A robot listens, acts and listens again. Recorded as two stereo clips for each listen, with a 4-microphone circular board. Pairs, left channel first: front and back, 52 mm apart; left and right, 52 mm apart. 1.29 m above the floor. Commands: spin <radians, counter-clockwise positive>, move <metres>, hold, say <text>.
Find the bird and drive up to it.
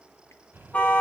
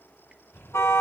spin 2.27
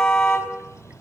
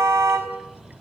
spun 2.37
move 1.0
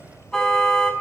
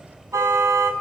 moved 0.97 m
move 1.0
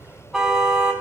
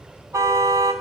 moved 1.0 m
spin -0.26
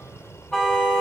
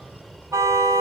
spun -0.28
move 1.0
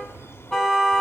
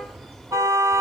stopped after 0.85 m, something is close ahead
say I am next to the bird.